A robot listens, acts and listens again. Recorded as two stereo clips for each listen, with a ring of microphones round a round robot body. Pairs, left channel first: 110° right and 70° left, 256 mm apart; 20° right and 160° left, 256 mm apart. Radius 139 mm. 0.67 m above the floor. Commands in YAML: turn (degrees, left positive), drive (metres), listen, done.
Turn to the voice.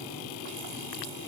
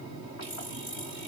listen: true
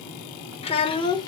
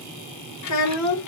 turn: -35
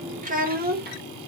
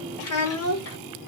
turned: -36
turn: 15
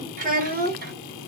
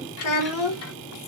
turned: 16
turn: 10
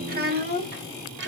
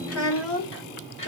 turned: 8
turn: 20
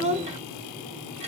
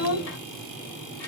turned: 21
done: "Facing the child speaking."